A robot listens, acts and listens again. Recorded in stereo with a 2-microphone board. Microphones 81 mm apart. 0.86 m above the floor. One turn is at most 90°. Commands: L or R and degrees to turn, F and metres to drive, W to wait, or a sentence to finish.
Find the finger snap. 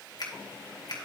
L55
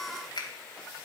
L65
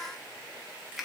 Found it: a finger snap, straight ahead, 2 to 4 m away.